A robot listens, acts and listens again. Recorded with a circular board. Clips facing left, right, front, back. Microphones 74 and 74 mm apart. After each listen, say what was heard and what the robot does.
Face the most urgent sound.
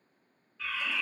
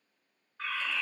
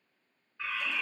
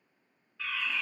The fire alarm: 65° right. Turn 65° right.
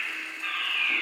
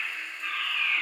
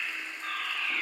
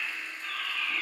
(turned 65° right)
The fire alarm is now 15° right. Turn 15° right.
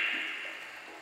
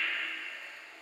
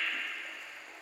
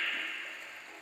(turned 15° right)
Keep listening.
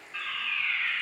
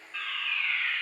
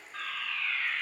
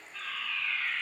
Facing the fire alarm, 2 to 4 m away.